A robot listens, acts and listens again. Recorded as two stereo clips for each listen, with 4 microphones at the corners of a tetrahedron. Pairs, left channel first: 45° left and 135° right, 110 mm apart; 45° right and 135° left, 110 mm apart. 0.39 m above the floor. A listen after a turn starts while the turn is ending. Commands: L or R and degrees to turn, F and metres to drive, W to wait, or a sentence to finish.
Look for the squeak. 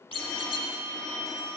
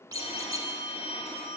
L80
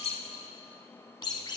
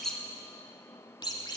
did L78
Facing the squeak, under 1 m away.